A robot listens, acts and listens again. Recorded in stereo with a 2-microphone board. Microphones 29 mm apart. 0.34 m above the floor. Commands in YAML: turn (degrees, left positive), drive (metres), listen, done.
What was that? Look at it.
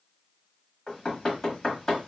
turn: 25
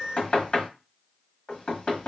turn: 130
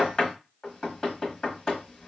turn: 30
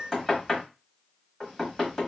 turn: 15
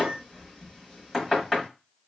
done: "Found it: knocking, straight ahead, 1 to 2 m away."